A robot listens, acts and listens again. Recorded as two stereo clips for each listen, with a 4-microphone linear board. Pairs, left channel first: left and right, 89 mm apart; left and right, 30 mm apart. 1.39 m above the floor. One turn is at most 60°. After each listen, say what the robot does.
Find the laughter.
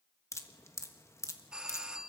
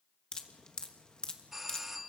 Keep listening.
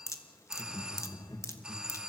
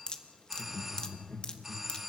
Turn 50° left.
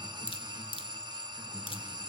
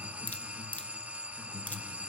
Turn 15° right.
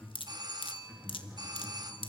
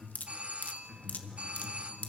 Turn 10° right.
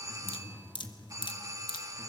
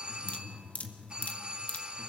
Facing the laughter, 2 to 4 m away.